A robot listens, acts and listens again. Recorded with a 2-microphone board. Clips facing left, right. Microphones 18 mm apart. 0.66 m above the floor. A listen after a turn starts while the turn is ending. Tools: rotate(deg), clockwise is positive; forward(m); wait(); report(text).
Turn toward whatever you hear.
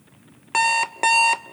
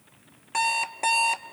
rotate(-40)
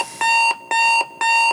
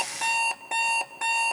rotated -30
rotate(-110)
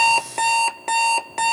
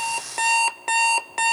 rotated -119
rotate(10)
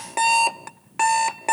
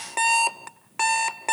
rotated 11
report("Found it: an alarm clock, straight ahead, under 1 m away.")